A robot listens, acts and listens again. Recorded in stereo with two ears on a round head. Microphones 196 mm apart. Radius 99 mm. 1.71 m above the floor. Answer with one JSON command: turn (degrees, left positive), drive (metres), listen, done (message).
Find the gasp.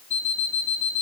{"listen": true}
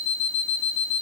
{"listen": true}
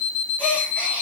{"turn": 30}
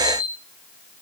{"listen": true}
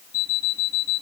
{"done": "I heard a gasp, but can't make it out now. It was about 25° right or 145° left."}